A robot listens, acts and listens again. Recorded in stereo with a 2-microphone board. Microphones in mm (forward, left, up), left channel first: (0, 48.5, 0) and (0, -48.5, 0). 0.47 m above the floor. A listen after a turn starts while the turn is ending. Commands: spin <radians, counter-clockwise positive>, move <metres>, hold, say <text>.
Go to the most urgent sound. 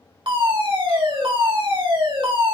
spin -0.96
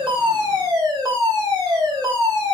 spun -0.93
spin -0.87
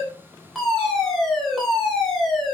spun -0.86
move 1.0
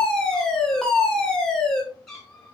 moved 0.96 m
spin 0.17
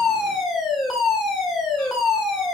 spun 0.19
move 1.0
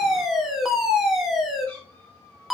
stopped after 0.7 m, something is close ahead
say I am next to the fire alarm.